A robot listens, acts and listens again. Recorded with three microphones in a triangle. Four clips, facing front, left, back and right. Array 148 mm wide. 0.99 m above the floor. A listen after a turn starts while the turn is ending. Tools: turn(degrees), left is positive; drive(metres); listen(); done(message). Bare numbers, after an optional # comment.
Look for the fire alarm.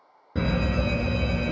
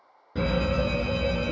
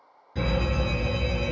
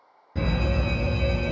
# The fire alarm: 25° left.
turn(25)
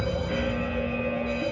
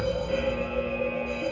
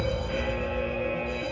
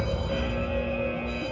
done("Facing the fire alarm, 2 to 4 m away.")